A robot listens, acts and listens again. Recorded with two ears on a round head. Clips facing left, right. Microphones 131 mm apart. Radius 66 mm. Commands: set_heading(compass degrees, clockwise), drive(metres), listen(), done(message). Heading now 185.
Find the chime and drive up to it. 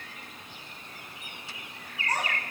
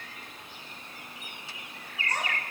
listen()
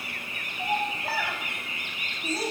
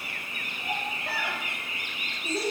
listen()
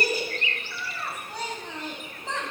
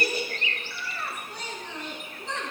done("I can't make out a chime, only a child speaking.")